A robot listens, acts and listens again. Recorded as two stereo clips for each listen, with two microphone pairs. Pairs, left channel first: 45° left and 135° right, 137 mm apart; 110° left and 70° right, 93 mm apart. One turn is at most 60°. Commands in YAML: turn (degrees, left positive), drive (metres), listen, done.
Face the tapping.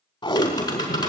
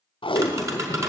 turn: -15
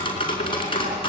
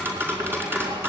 done: "Facing the tapping."